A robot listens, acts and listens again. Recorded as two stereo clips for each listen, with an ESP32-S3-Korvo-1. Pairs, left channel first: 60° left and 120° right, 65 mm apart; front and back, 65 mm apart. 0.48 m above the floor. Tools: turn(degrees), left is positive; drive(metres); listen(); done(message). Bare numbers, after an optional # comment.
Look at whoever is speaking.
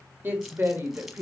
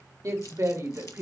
# The woman speaking: 170° right.
turn(-170)
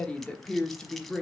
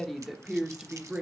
# The woman speaking is now 140° left.
turn(140)
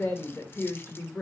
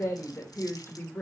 # The woman speaking is now 20° left.
turn(20)
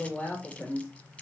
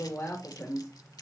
done("Found it: a woman speaking, straight ahead.")